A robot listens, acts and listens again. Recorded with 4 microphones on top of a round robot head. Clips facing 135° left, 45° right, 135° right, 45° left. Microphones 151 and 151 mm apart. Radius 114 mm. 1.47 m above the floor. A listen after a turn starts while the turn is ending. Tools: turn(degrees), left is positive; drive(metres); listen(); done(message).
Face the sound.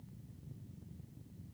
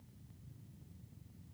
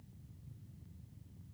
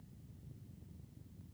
listen()
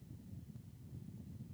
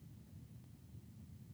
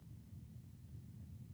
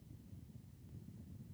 listen()
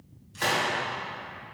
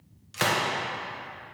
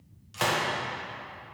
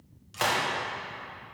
turn(degrees=-45)
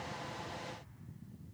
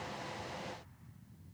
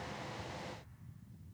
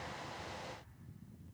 done("I heard a gunshot from this way, but can't make it out now.")